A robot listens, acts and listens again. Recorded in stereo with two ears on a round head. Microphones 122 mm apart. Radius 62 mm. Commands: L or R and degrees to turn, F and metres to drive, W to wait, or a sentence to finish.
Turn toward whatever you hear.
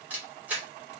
R30
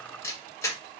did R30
L20
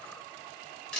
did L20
Found it: a camera shutter, straight ahead.